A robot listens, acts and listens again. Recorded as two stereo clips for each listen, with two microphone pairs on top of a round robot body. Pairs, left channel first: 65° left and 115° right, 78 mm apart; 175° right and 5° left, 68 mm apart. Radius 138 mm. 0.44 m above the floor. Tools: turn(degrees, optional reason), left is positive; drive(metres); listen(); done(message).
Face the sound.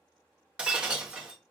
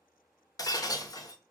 turn(degrees=170, reason="The breaking glass: 170° left.")
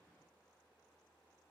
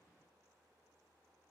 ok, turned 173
done("I heard breaking glass from this way, but can't make it out now.")